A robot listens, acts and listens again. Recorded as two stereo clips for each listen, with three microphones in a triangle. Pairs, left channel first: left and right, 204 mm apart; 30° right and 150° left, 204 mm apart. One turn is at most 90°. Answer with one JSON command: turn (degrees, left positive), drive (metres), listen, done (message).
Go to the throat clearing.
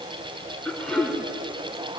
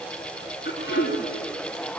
{"drive": 1.0}
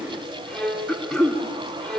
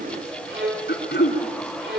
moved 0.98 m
{"drive": 1.0}
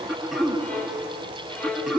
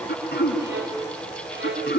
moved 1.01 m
{"drive": 1.0}
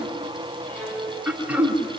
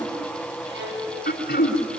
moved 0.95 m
{"turn": -10}
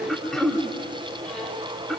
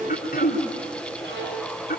{"drive": 1.0}
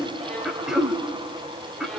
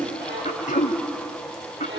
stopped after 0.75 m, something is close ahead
{"done": "Arrived at the throat clearing, straight ahead."}